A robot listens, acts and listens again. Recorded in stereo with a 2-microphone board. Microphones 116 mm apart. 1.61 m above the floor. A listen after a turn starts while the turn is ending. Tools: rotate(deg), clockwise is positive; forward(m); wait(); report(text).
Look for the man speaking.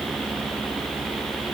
wait()
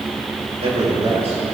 rotate(70)
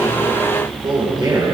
rotate(45)
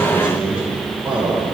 rotate(15)
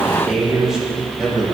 report("Facing the man speaking.")